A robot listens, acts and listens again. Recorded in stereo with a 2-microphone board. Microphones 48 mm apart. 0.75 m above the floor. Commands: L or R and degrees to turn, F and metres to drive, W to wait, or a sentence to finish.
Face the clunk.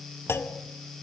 L60
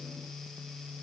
W
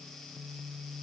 I heard a clunk, but can't make it out now. It was about straight ahead or 60° left.